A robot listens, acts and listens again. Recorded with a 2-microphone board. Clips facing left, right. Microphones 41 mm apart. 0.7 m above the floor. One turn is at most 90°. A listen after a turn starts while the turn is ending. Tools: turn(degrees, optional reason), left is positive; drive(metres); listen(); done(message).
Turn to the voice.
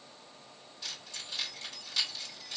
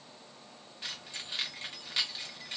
listen()
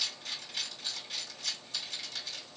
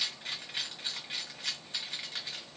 listen()
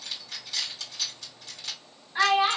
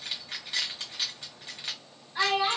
turn(degrees=25, reason="The child speaking: about 25° left or 155° left.")
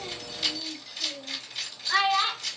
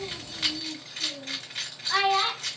done("Facing the child speaking.")